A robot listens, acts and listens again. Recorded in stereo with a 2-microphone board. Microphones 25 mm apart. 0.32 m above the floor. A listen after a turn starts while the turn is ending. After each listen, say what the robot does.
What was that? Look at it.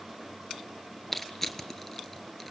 Turn 30° left.
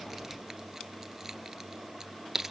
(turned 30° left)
Turn 20° right.
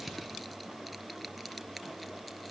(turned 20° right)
Keep listening.
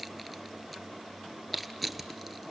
Found it: crushing, straight ahead.